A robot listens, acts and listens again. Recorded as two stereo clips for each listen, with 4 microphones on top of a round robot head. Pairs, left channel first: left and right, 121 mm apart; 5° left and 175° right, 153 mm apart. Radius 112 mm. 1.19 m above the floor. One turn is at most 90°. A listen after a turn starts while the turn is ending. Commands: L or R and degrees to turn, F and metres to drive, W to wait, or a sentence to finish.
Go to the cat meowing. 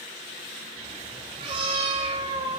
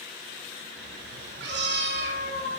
R90
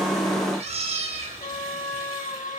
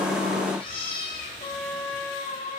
R60
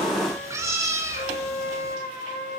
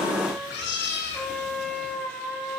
R25
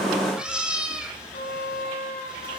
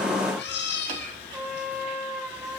F1.0
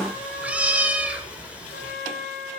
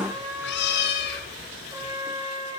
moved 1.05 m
R10
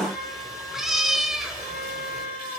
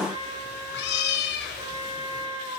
F1.0
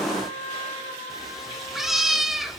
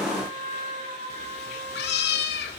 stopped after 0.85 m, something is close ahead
I am next to the cat meowing.